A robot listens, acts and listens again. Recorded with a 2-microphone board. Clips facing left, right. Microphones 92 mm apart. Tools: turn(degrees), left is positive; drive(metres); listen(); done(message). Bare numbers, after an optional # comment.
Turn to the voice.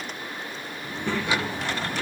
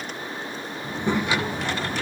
# The child speaking: about 15° right or 165° right.
turn(-15)
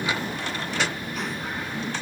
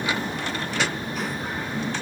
done("Facing the child speaking, 2 to 4 m away.")